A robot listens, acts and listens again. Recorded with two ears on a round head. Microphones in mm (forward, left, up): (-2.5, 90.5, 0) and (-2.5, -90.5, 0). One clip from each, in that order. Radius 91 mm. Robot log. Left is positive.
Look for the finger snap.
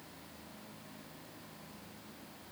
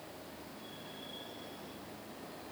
cmd idle
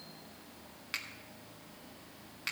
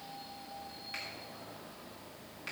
note: The finger snap: about 50° left or 130° left.
cmd yaw +50
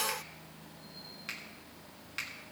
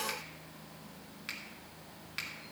end: Found it: a finger snap, straight ahead.